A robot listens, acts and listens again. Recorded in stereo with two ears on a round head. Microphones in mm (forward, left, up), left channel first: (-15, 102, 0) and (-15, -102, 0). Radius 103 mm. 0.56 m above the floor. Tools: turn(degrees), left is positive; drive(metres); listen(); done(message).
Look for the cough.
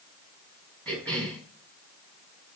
turn(degrees=30)
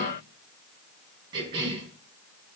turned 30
turn(degrees=-20)
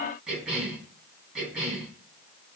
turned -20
done("Found it: a cough, straight ahead, over 4 m away.")